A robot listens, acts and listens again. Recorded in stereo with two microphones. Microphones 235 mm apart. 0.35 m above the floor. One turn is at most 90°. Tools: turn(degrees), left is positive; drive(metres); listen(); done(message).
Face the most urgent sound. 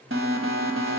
turn(degrees=-60)
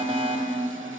turn(degrees=-30)
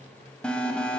done("Found it: an alarm, straight ahead, 1 to 2 m away.")